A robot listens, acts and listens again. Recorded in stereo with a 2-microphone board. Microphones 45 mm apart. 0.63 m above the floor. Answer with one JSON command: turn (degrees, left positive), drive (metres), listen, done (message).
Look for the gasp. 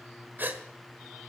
{"turn": -45}
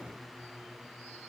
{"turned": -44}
{"listen": true}
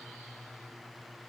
{"done": "I heard a gasp, but can't make it out now. It was about straight ahead or 90° right."}